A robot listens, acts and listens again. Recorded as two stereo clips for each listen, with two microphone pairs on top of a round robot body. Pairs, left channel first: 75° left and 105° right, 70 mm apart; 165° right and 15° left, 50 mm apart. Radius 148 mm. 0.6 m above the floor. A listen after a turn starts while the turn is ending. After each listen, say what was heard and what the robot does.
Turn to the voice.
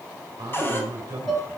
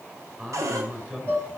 The man speaking: 65° right. Turn 65° right.
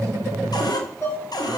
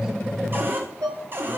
Keep listening.
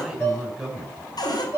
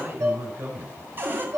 The man speaking is now 20° right. Turn 20° right.
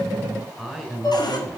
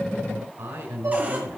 The man speaking is now 10° right. Turn 10° right.
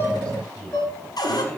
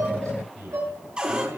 Facing the man speaking.